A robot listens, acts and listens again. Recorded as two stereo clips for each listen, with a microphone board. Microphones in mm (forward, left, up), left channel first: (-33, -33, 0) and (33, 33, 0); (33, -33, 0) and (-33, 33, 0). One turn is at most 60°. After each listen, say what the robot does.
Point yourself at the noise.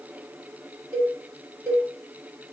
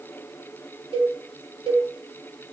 Turn 60° left.
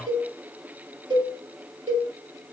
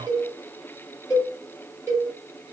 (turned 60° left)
Turn 60° left.
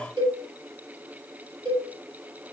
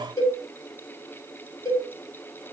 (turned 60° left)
Found it: a cowbell, straight ahead, over 4 m away.